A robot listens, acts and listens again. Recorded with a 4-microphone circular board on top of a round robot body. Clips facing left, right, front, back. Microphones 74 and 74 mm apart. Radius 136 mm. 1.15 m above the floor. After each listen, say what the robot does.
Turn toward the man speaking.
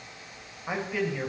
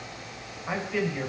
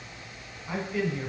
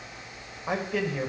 Turn 165° left.
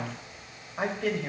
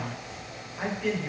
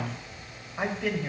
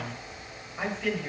Turn 55° left.
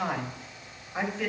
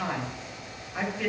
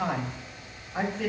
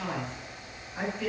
Facing the man speaking.